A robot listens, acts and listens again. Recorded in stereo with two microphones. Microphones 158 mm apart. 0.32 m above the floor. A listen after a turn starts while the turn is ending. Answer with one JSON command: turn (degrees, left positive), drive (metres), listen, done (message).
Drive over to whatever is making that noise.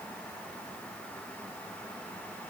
{"listen": true}
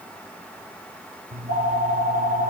{"turn": -60}
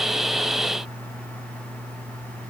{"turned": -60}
{"turn": -55}
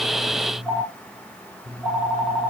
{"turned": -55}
{"drive": 1.0}
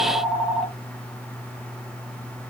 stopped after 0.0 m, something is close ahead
{"done": "Something is in my way. I am facing the phone ringing but have not reached it."}